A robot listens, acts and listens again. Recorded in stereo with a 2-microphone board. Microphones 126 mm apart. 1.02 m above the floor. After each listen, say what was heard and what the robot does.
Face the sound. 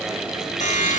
Turn 90° left.
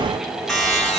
Facing the buzzer.